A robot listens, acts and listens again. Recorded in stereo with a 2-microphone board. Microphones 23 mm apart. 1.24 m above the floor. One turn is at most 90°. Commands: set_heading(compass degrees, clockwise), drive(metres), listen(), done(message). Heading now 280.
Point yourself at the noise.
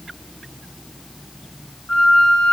set_heading(230)
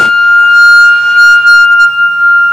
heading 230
done("Found it: a flute, straight ahead, 1 to 2 m away.")